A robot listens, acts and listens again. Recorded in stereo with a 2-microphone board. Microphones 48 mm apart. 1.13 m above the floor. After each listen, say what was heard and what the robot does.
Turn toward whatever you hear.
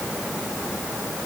Keep listening.
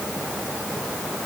Keep listening.
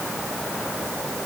I can't make out anything.